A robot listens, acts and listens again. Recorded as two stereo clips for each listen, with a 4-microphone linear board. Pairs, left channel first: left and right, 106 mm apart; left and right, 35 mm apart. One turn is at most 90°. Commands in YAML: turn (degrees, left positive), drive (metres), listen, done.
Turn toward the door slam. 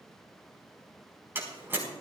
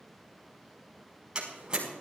turn: -20
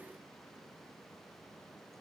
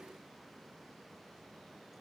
listen: true
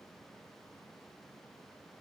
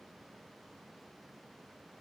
done: "I heard a door slam, but can't make it out now. It was about straight ahead or 140° right."